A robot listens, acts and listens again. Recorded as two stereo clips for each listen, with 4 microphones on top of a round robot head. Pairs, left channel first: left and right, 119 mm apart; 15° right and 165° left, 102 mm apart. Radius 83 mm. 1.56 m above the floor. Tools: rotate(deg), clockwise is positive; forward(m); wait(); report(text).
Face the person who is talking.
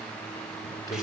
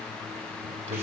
rotate(-150)
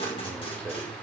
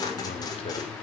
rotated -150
rotate(-10)
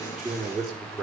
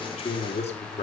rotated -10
report("Facing the man speaking, over 4 m away.")